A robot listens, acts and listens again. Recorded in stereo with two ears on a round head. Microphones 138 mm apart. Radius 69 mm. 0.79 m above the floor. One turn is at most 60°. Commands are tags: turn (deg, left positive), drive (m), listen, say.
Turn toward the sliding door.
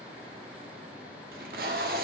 <listen/>
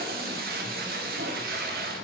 <listen/>
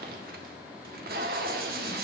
<say>I can't make out a sliding door to turn to.</say>